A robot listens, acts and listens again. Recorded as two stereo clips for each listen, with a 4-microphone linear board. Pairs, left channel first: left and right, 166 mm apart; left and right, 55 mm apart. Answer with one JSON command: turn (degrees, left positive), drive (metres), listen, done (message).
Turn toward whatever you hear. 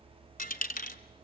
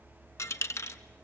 {"turn": 55}
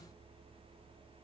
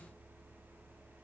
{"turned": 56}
{"listen": true}
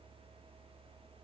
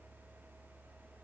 {"done": "I heard a dropped coin, but can't make it out now. It was about straight ahead or 65° left."}